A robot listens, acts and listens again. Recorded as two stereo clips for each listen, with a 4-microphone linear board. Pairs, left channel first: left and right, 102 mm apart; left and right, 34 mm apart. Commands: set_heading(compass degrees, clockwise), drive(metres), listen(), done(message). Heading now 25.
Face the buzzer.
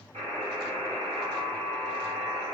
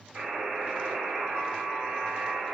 set_heading(115)
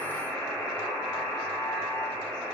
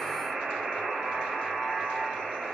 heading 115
done("Facing the buzzer, 1 to 2 m away.")